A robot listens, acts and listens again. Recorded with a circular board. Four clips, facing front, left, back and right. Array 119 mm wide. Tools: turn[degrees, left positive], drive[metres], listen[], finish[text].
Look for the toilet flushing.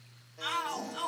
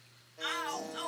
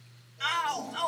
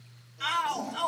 Thought: The toilet flushing: 95° right.
Action: turn[-95]
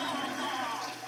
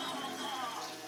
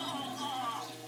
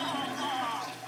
Thought: The toilet flushing is now 35° right.
Action: turn[-35]
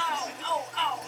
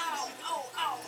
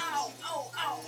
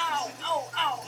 Thought: The toilet flushing is now 15° right.
Action: turn[-15]
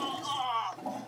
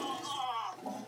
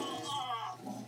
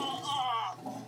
Action: finish[Facing the toilet flushing, under 1 m away.]